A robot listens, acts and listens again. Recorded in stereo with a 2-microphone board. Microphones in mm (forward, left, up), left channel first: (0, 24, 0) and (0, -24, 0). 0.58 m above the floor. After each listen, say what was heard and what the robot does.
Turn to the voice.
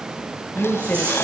The woman speaking: about 50° left or 130° left. Turn 50° left.
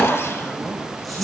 Keep listening.
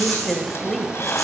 Facing the woman speaking, 2 to 4 m away.